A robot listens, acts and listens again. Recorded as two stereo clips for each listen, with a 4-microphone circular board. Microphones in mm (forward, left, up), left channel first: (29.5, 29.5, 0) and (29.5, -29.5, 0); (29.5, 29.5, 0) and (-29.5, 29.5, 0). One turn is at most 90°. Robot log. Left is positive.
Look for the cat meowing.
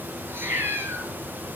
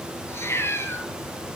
note: The cat meowing: 40° right.
cmd yaw -40
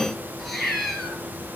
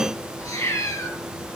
end: Found it: a cat meowing, straight ahead.